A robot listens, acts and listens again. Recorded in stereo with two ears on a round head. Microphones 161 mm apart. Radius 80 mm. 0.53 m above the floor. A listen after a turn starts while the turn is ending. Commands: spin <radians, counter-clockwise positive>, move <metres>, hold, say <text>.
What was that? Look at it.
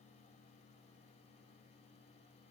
hold
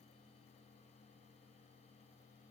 hold
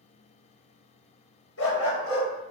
spin 1.57
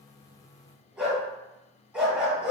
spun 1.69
say Found it: a dog barking, straight ahead.